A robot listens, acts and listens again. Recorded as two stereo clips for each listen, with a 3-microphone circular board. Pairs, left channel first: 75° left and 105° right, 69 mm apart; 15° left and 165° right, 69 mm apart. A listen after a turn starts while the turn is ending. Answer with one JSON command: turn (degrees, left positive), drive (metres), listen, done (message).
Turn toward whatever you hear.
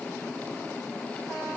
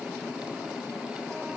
{"listen": true}
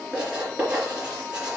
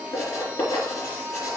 {"turn": -30}
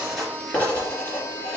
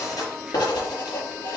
{"done": "Facing the writing."}